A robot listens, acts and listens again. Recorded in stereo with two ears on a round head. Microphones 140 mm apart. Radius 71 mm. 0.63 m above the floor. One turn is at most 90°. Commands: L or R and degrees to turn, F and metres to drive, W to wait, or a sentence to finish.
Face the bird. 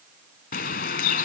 L60
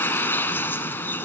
L15
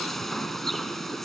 Found it: a bird, straight ahead, 1 to 2 m away.